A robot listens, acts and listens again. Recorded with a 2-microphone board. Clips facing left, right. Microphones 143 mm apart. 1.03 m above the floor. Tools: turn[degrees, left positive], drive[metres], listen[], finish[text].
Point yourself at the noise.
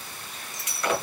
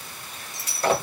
Thought: The breaking glass: about 35° right or 145° right.
Action: turn[-35]
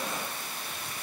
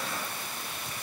Action: listen[]
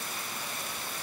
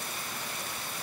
Action: finish[I heard breaking glass, but can't make it out now. It was about straight ahead or 110° right.]